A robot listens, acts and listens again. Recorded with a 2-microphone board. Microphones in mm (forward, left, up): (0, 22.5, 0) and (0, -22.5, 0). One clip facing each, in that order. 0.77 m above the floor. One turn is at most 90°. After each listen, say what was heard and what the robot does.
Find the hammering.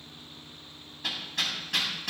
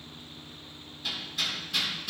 The hammering: about 65° left or 115° left. Turn 65° left.
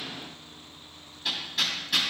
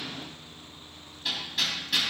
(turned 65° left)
Found it: hammering, straight ahead, over 4 m away.